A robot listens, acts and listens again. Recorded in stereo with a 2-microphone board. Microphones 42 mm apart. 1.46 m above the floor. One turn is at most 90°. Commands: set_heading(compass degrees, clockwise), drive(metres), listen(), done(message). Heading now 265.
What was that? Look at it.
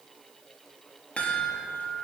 set_heading(235)
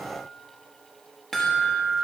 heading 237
set_heading(227)
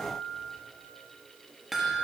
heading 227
done("Found it: a chime, straight ahead, 1 to 2 m away.")